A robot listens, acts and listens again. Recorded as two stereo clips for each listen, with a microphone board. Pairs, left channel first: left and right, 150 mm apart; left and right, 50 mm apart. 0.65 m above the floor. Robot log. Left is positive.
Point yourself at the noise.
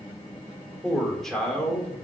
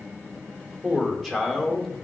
cmd yaw +30
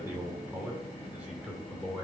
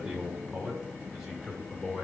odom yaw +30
cmd yaw -30
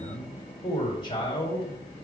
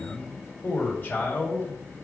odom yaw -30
note: So it is at 35° left.
cmd yaw +35
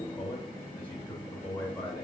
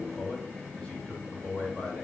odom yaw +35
note: The man speaking is now 10° left.
cmd yaw +10
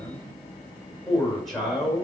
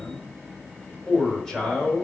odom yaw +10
end: Found it: a man speaking, straight ahead, 2 to 4 m away.